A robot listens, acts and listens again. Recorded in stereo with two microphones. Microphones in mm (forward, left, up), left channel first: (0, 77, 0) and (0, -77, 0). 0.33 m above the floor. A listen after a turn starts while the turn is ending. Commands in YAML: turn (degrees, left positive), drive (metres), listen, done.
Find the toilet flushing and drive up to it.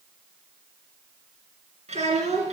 listen: true
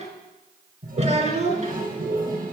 turn: -65
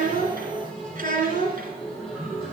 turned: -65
drive: 1.0
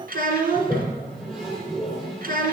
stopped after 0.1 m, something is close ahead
done: "Something is in my way. I am facing the toilet flushing but have not reached it."